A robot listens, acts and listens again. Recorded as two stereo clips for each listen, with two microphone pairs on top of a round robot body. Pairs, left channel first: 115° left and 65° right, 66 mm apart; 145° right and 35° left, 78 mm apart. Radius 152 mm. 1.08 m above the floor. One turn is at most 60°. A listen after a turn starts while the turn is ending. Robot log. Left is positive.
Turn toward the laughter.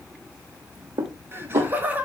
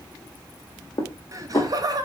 end: Found it: laughter, straight ahead, 1 to 2 m away.